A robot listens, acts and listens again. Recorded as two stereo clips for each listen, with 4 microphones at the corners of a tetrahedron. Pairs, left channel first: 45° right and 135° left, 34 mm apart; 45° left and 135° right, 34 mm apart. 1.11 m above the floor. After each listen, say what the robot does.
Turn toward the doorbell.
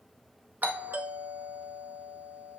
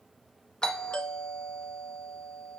Turn 110° left.
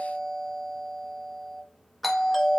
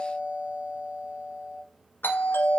Turn 45° left.
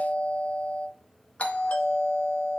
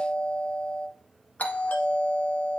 Facing the doorbell.